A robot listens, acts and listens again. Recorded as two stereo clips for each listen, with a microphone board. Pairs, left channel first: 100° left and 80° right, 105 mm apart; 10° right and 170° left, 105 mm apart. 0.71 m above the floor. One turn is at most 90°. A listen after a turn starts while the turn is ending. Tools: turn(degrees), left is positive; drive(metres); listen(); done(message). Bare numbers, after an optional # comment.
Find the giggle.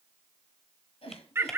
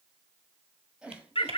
# The giggle: 90° left.
turn(90)
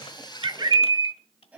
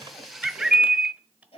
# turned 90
done("Facing the giggle.")